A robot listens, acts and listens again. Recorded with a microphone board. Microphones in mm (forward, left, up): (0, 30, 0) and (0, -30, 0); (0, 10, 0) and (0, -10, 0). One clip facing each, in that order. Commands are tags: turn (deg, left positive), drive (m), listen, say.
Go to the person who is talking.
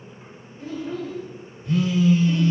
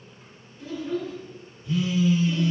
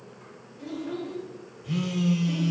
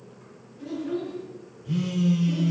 <turn deg="35"/>
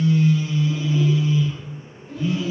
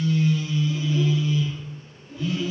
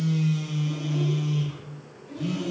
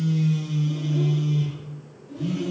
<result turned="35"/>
<turn deg="105"/>
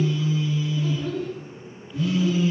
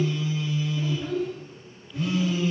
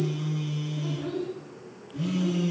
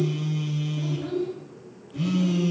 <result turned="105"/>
<turn deg="-15"/>
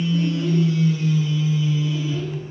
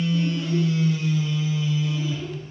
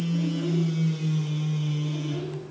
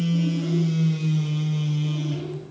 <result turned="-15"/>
<listen/>
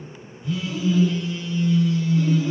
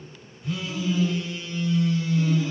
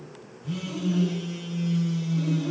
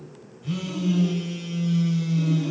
<listen/>
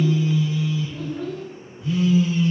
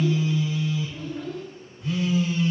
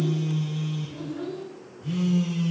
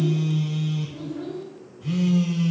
<drive m="1.0"/>
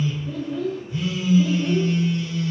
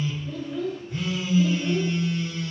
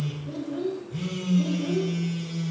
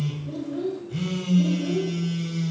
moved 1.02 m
<drive m="1.0"/>
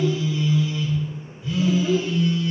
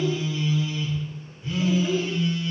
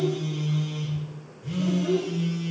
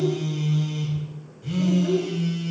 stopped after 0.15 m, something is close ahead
<turn deg="-10"/>
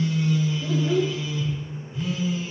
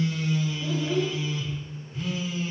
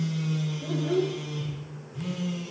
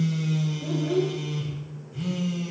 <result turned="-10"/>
<say>Arrived at the child speaking, straight ahead.</say>